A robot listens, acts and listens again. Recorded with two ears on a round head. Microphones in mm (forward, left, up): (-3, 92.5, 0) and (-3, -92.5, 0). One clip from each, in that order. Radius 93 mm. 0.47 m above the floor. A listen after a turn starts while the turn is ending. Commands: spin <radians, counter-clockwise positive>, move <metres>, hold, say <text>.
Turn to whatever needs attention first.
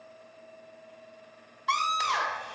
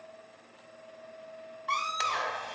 spin 0.70
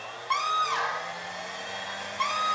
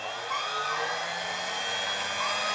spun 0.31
spin 2.27
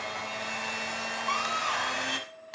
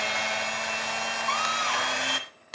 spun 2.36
hold
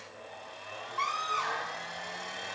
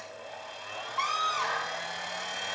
spin -0.35
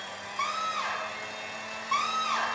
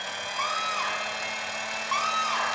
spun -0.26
say Facing the scream, 1 to 2 m away.